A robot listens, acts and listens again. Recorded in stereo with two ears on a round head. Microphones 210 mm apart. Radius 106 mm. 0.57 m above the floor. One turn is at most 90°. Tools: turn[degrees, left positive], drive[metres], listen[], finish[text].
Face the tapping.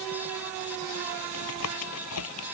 Thought: The tapping: about 75° left or 105° left.
Action: turn[75]
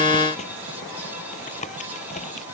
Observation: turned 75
Thought: So it is at 30° left.
Action: turn[30]
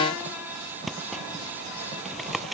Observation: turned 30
Action: finish[Facing the tapping.]